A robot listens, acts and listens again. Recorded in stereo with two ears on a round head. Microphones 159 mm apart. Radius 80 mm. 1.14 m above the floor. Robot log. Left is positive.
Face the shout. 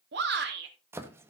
note: The shout: about 70° right or 110° right.
cmd yaw -70
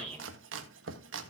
note: So it is at 35° right.
cmd yaw -35
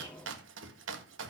cmd idle
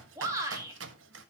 note: The shout is now 15° right.
cmd yaw -15
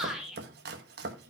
end: Facing the shout, 2 to 4 m away.